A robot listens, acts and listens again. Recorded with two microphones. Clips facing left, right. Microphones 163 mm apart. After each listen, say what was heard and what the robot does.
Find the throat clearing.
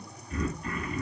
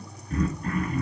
The throat clearing: about 50° right or 130° right. Turn 50° right.
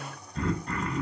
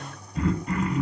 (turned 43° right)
So it is at 10° right. Turn 10° right.
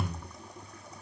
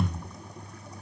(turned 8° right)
Found it: throat clearing, straight ahead, 1 to 2 m away.